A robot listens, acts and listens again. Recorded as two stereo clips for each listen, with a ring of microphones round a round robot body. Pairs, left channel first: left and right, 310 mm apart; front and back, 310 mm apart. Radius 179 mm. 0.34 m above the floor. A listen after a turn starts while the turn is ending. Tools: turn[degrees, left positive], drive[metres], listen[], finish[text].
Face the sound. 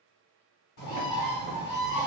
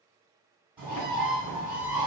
Thought: The bird: 95° left.
Action: turn[95]
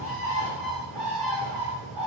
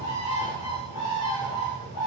Action: finish[Found it: a bird, straight ahead, 1 to 2 m away.]